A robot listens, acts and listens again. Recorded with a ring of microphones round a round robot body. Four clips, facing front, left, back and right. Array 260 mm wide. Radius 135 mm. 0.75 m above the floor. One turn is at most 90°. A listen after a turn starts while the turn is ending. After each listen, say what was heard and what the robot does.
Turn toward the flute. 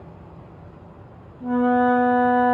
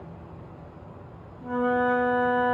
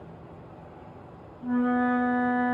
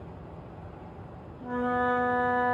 Found it: a flute, straight ahead, over 4 m away.